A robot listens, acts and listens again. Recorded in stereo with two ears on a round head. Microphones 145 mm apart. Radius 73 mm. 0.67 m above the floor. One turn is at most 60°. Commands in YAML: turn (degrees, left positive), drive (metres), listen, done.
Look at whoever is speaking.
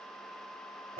listen: true
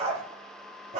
listen: true
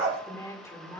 turn: 15
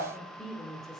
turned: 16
done: "Facing the woman speaking."